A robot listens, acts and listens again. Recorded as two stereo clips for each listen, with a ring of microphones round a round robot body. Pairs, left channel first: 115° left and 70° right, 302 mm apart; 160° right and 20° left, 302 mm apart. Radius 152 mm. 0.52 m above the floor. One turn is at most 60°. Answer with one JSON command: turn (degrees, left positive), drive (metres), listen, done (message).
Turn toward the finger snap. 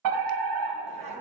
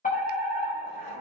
{"listen": true}
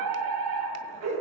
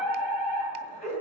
{"listen": true}
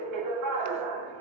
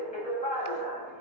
{"done": "I can't make out a finger snap to turn to."}